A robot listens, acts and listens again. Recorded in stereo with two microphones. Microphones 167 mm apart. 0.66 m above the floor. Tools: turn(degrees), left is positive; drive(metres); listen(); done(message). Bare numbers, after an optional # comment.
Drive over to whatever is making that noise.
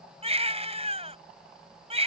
# The baby crying: about 40° right or 140° right.
turn(-40)
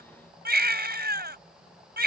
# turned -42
# So it is at 100° right.
turn(-100)
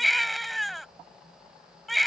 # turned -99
drive(1.0)
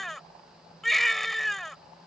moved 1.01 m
drive(1.0)
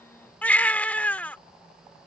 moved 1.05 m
# The baby crying is now 10° left.
turn(10)
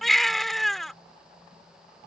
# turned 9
drive(1.0)
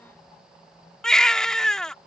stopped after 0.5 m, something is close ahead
done("Arrived at the baby crying, straight ahead.")